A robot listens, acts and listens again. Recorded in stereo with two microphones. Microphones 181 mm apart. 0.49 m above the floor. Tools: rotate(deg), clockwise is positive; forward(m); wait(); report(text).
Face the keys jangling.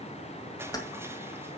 rotate(-20)
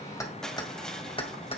rotate(-35)
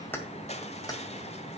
rotate(-20)
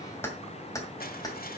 rotate(-25)
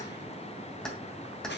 report("Facing the keys jangling.")